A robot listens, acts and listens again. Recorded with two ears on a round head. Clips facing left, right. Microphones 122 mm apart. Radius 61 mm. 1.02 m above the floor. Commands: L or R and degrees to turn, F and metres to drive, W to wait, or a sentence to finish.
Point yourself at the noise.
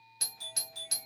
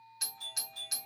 L65
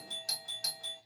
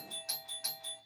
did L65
L40
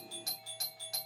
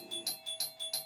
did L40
R15
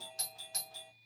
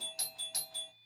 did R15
Found it: a doorbell, straight ahead.